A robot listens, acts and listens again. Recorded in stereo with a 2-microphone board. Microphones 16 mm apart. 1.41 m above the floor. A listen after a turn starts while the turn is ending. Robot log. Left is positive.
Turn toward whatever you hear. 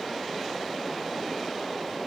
cmd idle
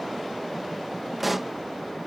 cmd yaw -30
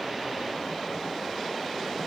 cmd idle
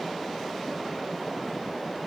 end: I heard a pop, but can't make it out now. It was about 25° left or 145° right.